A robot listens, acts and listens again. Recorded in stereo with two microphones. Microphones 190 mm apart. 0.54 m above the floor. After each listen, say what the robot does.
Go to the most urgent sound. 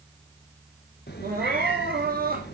Turn 55° right.
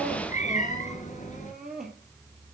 Drive 1.0 m forward.
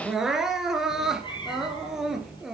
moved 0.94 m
Drive 1.0 m forward.
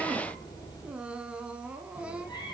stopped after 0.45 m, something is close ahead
I am next to the crying.